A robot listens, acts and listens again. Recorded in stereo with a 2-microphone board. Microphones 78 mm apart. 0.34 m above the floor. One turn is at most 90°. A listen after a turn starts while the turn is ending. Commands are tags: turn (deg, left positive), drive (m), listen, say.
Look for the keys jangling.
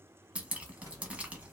<turn deg="-45"/>
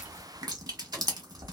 <turn deg="-80"/>
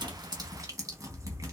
<listen/>
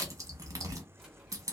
<turn deg="-10"/>
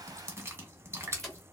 <listen/>
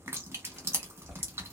<listen/>
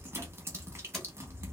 <say>Facing where the keys jangling came from. I can't hear it now.</say>